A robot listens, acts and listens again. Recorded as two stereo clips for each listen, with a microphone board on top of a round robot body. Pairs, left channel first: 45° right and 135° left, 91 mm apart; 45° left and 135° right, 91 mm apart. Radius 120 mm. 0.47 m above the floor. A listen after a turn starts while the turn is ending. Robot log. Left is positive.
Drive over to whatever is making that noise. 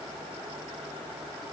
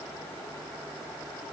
cmd idle
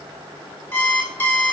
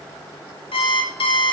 note: The alarm clock: 25° left.
cmd yaw +25
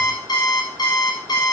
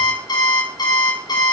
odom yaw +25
cmd fwd 1.0
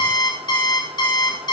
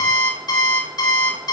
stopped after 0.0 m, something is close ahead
end: Something is in my way. I am facing the alarm clock but have not reached it.